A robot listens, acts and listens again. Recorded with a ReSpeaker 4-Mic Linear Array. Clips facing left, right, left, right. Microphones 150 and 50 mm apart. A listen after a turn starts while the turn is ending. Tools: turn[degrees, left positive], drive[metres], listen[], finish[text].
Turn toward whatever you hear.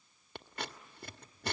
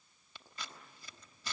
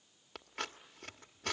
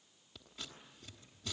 Thought: The scissors: about 60° left or 120° left.
Action: turn[60]
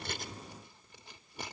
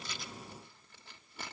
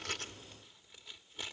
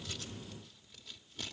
Thought: So it is at 15° left.
Action: turn[15]
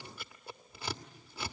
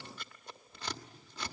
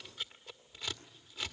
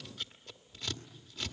Thought: The scissors is now 10° left.
Action: turn[10]
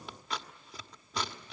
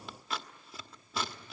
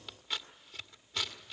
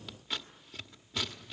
Action: finish[Found it: scissors, straight ahead, 1 to 2 m away.]